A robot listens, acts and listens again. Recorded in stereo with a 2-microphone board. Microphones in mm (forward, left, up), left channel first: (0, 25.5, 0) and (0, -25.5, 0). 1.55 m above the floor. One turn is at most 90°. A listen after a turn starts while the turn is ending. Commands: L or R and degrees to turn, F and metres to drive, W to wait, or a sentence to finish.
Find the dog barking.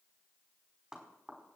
W
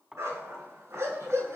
R65
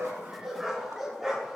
R10
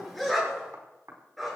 Facing the dog barking, over 4 m away.